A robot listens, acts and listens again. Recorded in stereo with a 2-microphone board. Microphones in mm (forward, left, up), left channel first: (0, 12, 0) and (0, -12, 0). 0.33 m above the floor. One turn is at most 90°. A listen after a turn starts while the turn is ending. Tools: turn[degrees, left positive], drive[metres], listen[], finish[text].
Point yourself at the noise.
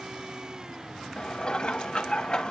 Thought: The dishes clattering: about 40° left or 140° left.
Action: turn[40]
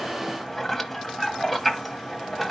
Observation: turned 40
Action: finish[Facing the dishes clattering, 1 to 2 m away.]